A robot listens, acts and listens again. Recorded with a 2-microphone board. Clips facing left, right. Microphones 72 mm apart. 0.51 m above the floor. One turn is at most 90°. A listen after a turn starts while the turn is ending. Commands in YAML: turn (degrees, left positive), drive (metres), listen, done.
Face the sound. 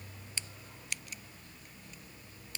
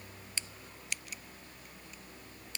listen: true
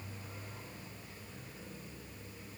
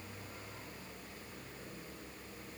listen: true
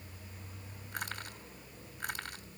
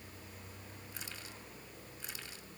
turn: 55
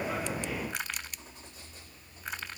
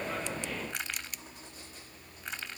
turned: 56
done: "Found it: crushing, straight ahead."